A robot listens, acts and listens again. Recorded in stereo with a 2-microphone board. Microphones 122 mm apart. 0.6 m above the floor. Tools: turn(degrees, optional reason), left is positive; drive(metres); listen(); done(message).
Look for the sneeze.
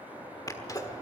turn(degrees=30, reason="The sneeze: about 30° left or 150° left.")
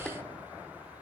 done("Facing the sneeze.")